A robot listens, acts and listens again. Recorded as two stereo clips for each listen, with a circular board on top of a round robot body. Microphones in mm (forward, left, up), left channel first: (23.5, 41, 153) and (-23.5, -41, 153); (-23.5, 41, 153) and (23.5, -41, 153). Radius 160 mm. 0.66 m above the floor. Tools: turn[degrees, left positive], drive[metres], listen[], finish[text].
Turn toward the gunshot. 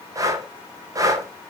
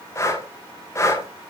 Action: listen[]
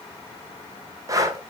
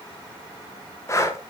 Action: listen[]
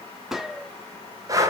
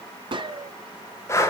Thought: The gunshot: 35° right.
Action: turn[-35]
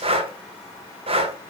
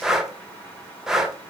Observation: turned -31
Action: finish[I heard a gunshot from this way, but can't make it out now.]